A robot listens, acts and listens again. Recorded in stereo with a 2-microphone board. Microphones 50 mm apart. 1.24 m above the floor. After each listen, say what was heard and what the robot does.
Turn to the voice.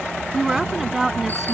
Turn 30° right.
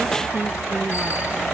Keep listening.
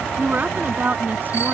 So it is at 140° right. Turn 140° right.
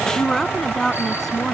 Found it: a woman speaking, straight ahead.